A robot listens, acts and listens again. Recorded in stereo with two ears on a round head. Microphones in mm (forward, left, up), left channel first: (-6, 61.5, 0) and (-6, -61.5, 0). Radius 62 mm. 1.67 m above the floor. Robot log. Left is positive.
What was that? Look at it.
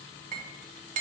note: The clink: about 55° right or 125° right.
cmd yaw -55
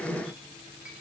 cmd idle
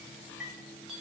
end: Facing the clink.